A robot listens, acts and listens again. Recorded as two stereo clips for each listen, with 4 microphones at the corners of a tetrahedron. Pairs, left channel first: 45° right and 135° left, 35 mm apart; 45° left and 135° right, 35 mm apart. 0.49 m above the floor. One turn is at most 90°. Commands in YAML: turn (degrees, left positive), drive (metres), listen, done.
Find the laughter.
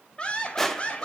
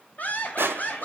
done: "Facing the laughter."